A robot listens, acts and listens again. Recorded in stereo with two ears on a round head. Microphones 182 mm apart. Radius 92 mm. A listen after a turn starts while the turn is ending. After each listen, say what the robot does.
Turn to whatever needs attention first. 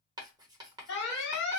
Turn 60° left.
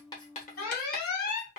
Turn 50° left.
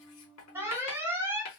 Turn 10° right.
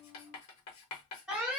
Found it: an alarm, straight ahead.